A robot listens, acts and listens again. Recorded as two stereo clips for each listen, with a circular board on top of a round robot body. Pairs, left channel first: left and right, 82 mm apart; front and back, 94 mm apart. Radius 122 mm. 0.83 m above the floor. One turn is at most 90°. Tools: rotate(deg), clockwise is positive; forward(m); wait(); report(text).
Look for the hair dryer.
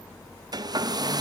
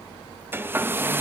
rotate(90)
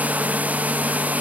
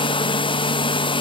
rotate(20)
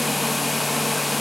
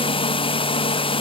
report("Found it: a hair dryer, straight ahead, 1 to 2 m away.")